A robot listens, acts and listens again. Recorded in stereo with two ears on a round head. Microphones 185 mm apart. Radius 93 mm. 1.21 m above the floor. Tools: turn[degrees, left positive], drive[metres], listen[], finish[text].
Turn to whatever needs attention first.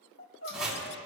Thought: The crying: about 60° left or 120° left.
Action: turn[60]
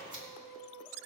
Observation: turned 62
Action: finish[Facing the crying.]